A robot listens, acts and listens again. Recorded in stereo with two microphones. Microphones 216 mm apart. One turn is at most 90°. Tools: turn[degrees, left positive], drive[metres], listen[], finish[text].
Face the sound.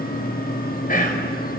Thought: The whispering: about 40° left or 140° left.
Action: turn[40]
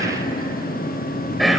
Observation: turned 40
Action: finish[Found it: whispering, straight ahead.]